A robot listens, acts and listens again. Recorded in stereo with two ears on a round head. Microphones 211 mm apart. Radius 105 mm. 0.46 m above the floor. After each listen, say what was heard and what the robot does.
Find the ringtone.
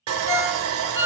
The ringtone: about 25° left or 155° left. Turn 25° left.
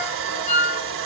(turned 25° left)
So it is at 130° left. Turn 130° left.
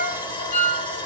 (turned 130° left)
The ringtone is now 40° left. Turn 40° left.
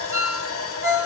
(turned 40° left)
The ringtone is now 15° right. Turn 15° right.
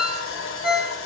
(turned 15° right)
Found it: a ringtone, straight ahead, 1 to 2 m away.